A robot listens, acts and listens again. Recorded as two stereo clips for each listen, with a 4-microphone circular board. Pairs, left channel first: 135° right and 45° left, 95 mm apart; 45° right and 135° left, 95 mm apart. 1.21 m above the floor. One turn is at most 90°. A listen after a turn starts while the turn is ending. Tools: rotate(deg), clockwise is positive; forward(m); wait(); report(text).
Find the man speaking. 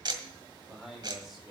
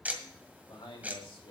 rotate(45)
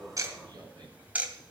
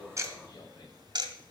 wait()
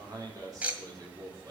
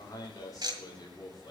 report("Found it: a man speaking, straight ahead, 2 to 4 m away.")